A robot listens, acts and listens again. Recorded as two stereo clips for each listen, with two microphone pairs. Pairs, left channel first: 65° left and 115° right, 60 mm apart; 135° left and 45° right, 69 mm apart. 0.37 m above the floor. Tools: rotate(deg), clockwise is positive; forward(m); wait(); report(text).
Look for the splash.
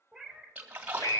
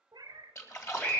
rotate(-180)
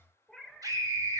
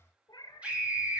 report("I heard a splash from this way, but can't make it out now.")